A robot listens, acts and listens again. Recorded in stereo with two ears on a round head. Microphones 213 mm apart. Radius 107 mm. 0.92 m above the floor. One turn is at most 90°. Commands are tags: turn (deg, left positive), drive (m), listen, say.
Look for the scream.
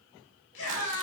<turn deg="55"/>
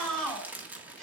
<say>Found it: a scream, straight ahead, over 4 m away.</say>